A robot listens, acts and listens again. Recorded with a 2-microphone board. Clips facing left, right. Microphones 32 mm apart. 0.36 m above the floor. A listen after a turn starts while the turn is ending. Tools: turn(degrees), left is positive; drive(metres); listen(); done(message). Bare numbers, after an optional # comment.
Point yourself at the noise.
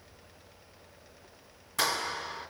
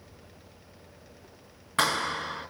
# The clap: about 40° right or 140° right.
turn(-40)
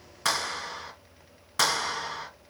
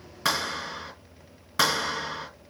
done("Facing the clap.")